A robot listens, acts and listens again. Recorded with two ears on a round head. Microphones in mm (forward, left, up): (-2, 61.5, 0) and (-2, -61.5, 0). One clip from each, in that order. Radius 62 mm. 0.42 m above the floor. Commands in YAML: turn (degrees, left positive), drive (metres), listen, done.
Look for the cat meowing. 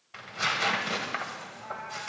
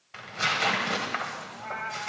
turn: -55
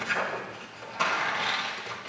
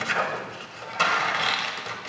listen: true
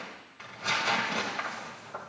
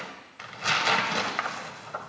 listen: true
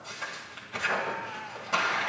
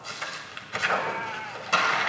turn: -65
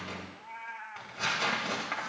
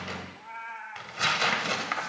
done: "Found it: a cat meowing, straight ahead, 1 to 2 m away."